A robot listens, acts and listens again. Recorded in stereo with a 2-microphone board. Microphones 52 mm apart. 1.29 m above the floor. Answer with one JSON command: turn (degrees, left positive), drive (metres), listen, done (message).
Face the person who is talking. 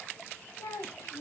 {"turn": 75}
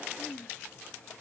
{"done": "Found it: a child speaking, straight ahead."}